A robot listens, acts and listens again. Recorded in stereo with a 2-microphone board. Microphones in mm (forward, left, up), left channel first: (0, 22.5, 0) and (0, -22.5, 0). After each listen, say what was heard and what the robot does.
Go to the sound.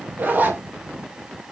The zipper: about 40° right or 140° right. Turn 40° right.
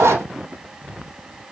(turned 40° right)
So it is at 100° right. Turn 100° right.
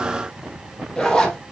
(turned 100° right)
The zipper is now 10° left. Turn 10° left.
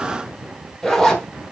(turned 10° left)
Drive 1.0 m forward.
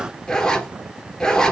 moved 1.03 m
The zipper is now 10° left. Turn 10° left.
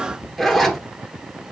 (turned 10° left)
Drive 1.0 m forward.
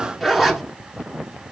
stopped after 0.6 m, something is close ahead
Arrived at the zipper, straight ahead.